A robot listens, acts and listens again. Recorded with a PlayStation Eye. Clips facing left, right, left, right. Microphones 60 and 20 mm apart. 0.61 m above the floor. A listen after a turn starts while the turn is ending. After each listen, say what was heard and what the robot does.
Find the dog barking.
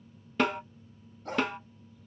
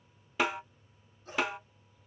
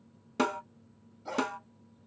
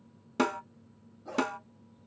The dog barking: about 70° left or 110° left. Turn 70° left.
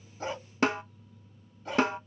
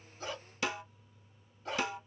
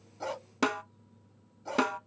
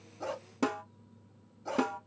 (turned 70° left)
Facing the dog barking, 1 to 2 m away.